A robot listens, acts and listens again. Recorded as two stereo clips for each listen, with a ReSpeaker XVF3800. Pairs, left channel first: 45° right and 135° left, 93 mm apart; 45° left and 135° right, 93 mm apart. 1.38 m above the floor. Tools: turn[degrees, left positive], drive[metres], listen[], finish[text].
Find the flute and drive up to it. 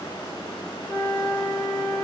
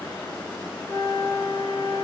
Thought: The flute: 35° left.
Action: turn[35]
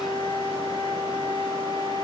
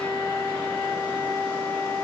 Thought: The flute is now 10° right.
Action: turn[-10]
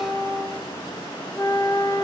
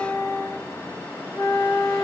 Action: drive[1.0]
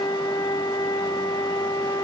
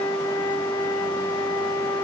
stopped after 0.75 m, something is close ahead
Action: finish[I am next to the flute.]